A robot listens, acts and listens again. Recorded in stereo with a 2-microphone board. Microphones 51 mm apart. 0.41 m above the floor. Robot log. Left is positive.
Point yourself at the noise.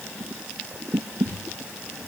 note: The crumpling: about 35° left or 145° left.
cmd yaw +35
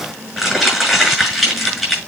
end: Facing the crumpling, over 4 m away.